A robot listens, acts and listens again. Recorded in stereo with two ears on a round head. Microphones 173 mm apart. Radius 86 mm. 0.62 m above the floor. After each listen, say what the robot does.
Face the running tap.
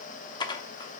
Keep listening.
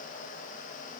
Keep listening.
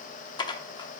I can't make out a running tap to turn to.